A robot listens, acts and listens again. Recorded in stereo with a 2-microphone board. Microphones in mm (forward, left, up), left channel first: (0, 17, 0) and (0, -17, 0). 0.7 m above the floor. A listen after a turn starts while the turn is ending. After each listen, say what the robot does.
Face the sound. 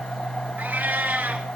Turn 55° right.
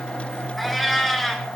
Facing the cat meowing.